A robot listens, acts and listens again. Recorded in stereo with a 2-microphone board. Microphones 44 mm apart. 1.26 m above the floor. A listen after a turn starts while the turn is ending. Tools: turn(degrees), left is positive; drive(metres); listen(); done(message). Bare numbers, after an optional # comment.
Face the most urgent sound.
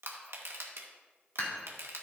listen()
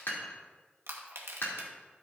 listen()
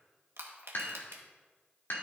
done("I can't make out anything urgent to turn to.")